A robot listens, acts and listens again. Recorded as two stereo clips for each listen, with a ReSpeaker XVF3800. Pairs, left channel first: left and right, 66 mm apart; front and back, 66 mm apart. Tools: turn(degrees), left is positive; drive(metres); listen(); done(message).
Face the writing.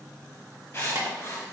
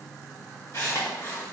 turn(degrees=40)
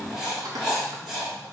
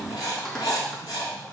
done("Facing the writing.")